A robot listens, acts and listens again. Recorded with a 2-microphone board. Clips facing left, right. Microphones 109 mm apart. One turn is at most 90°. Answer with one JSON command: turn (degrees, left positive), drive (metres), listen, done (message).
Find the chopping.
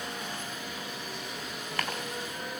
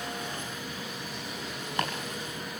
{"turn": -20}
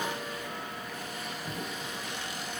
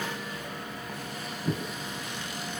{"turn": -90}
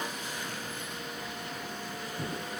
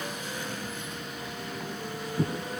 {"turn": -50}
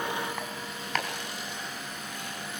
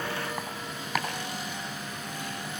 {"turn": -10}
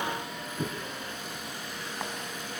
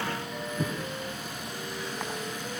{"done": "Found it: chopping, straight ahead."}